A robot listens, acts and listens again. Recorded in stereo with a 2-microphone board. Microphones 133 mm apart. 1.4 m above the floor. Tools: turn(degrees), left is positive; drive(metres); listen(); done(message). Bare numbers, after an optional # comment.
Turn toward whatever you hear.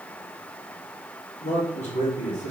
# The man speaking: about 60° left or 120° left.
turn(60)
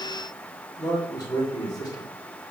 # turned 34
# So it is at 30° left.
turn(30)
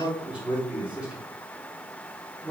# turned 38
# The man speaking is now 10° right.
turn(-10)
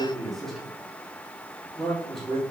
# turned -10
done("Facing the man speaking.")